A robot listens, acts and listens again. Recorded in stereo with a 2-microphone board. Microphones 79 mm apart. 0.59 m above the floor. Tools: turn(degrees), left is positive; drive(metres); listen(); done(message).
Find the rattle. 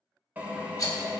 turn(degrees=45)
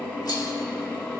listen()
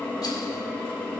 listen()
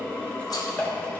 done("I heard a rattle, but can't make it out now. It was about straight ahead or 90° left.")